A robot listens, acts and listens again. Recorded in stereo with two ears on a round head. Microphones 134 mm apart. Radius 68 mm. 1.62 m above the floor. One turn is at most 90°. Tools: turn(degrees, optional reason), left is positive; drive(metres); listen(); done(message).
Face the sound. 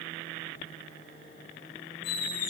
turn(degrees=60, reason="The squeak: about 60° left or 120° left.")
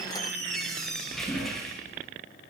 done("Facing the squeak, over 4 m away.")